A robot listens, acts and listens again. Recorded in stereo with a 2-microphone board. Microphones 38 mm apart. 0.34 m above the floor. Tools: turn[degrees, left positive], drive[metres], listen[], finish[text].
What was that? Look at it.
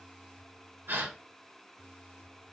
Thought: The gasp: about 75° right or 105° right.
Action: turn[-75]
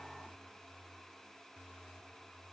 Action: listen[]
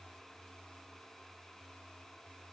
Action: finish[I heard a gasp, but can't make it out now. It was about straight ahead or 30° right.]